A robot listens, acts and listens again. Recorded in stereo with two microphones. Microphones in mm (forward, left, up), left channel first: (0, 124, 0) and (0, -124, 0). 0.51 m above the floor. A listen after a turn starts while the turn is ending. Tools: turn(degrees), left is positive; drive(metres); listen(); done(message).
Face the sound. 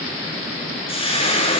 turn(degrees=20)
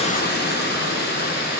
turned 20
turn(degrees=135)
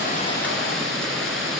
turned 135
listen()
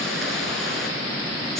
listen()
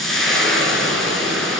done("Facing the frying, 2 to 4 m away.")